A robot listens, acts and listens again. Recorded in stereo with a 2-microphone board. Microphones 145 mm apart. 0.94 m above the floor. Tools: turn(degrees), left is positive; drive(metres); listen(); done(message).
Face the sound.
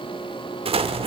turn(degrees=-45)
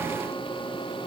listen()
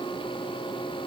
done("I heard an explosion, but can't make it out now. It was about straight ahead or 90° right.")